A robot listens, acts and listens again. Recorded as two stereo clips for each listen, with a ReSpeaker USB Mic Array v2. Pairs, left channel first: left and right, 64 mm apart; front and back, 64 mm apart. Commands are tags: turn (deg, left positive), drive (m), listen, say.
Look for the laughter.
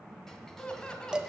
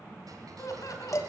<turn deg="15"/>
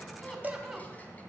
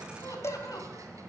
<turn deg="-10"/>
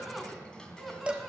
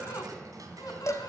<say>Found it: laughter, straight ahead, 2 to 4 m away.</say>